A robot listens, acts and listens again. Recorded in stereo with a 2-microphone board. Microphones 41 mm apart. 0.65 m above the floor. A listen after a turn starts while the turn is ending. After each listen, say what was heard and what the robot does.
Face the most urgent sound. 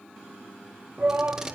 The shout: about 55° right or 125° right. Turn 55° right.
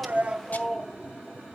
So it is at 15° right. Turn 15° right.
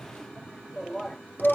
Facing the shout, under 1 m away.